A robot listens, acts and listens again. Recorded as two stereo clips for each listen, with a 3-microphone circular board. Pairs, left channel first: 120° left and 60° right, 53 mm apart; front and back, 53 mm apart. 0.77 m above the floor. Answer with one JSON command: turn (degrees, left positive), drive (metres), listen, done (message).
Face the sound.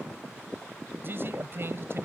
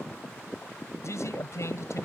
{"turn": -20}
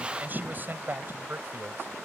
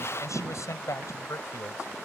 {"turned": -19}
{"turn": -15}
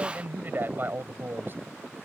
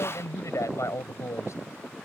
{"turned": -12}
{"turn": -15}
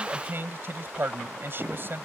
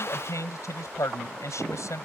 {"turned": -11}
{"turn": -15}
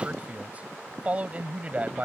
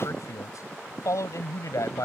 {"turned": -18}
{"done": "Facing the man speaking."}